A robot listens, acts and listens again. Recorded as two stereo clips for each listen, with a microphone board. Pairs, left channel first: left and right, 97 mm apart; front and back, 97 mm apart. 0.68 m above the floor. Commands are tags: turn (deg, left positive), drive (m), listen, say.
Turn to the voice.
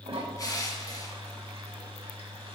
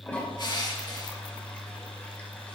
<listen/>
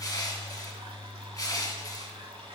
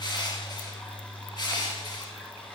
<listen/>
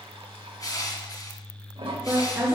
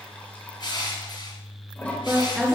<turn deg="-105"/>
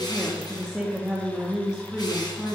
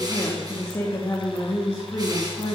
<turn deg="-10"/>
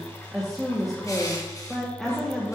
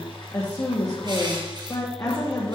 <say>Found it: a woman speaking, straight ahead.</say>